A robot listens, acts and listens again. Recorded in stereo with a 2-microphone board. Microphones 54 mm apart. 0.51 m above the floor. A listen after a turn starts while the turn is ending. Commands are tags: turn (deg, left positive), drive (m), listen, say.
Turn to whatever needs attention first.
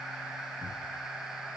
<listen/>
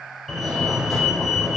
<turn deg="30"/>
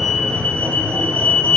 <turn deg="150"/>
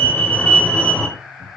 <turn deg="20"/>
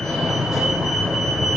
<say>Facing the fire alarm, 2 to 4 m away.</say>